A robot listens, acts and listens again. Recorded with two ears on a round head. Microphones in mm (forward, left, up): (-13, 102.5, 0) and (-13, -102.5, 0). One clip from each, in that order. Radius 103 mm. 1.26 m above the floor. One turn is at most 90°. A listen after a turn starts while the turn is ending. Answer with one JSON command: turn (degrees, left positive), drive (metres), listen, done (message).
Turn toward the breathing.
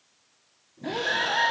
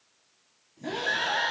{"turn": 30}
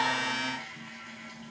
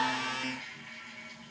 {"listen": true}
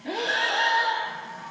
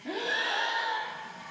{"turn": 90}
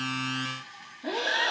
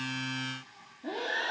{"turn": 60}
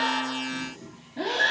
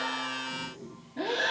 {"done": "Found it: breathing, straight ahead, 2 to 4 m away."}